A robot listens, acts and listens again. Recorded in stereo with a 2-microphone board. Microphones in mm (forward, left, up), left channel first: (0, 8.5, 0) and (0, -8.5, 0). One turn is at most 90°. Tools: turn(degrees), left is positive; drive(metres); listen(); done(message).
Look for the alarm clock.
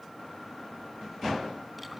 listen()
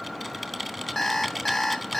turn(degrees=30)
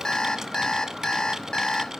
turn(degrees=90)
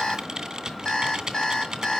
turn(degrees=55)
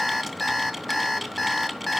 turn(degrees=10)
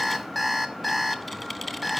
done("Found it: an alarm clock, straight ahead, 1 to 2 m away.")